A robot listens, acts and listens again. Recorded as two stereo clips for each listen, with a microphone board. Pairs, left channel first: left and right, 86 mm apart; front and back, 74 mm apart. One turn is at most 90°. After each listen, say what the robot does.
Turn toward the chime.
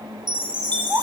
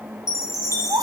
Turn 50° right.
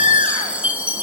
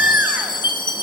Turn 15° right.
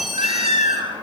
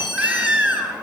Facing the chime, over 4 m away.